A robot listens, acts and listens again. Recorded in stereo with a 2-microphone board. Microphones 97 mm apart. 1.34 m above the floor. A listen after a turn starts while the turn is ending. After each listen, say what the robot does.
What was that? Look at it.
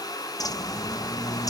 Turn 40° left.
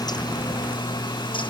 Turn 90° left.
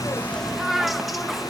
Found it: a bird, straight ahead.